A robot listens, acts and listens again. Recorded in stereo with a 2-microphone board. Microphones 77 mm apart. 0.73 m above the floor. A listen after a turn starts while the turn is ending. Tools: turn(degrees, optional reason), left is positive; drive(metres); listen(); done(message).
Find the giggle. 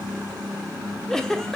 turn(degrees=30)
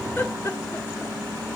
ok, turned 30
turn(degrees=140, reason="So it is at 140° left.")
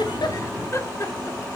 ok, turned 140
turn(degrees=40, reason="The giggle is now 40° left.")
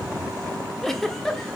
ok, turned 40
done("Facing the giggle.")